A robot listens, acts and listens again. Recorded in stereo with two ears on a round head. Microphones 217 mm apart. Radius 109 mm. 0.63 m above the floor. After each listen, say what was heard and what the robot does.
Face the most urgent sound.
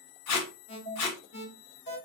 The alarm: about 50° left or 130° left. Turn 50° left.
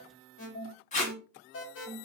So it is at 70° left. Turn 70° left.
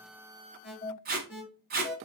Facing the alarm, 1 to 2 m away.